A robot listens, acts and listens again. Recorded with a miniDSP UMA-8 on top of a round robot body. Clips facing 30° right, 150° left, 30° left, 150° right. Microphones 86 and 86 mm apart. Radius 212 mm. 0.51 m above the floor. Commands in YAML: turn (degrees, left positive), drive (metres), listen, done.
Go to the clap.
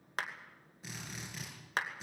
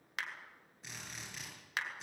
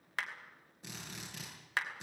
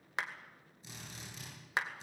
turn: -80
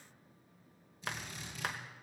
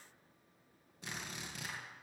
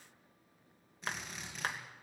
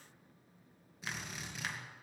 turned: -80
turn: -15
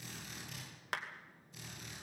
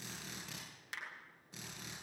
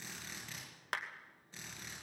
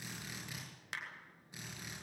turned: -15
drive: 1.0
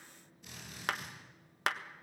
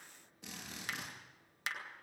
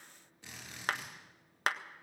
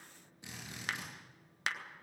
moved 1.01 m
turn: -10
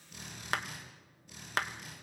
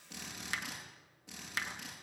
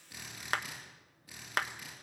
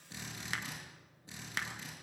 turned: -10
drive: 1.0
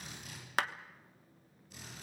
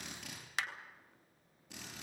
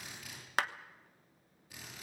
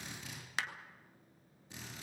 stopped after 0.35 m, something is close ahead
done: "I am next to the clap."